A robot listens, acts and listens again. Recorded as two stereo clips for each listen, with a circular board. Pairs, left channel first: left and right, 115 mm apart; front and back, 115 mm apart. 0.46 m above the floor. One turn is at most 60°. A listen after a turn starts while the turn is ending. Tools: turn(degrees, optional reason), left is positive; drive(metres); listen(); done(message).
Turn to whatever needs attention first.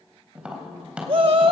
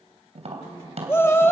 turn(degrees=-60, reason="The shout: 65° right.")
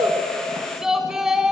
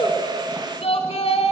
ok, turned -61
done("Facing the shout.")